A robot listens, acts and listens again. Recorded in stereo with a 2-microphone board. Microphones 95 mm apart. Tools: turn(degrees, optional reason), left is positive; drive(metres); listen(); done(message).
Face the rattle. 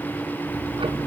listen()
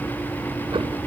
listen()
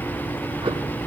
done("I can't make out a rattle to turn to.")